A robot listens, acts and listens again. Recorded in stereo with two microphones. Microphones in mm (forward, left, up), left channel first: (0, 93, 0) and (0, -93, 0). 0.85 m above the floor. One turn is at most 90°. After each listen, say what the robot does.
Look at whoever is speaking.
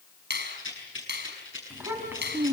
Turn 30° right.
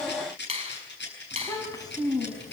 Turn 20° left.
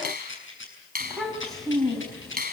Facing the child speaking, 2 to 4 m away.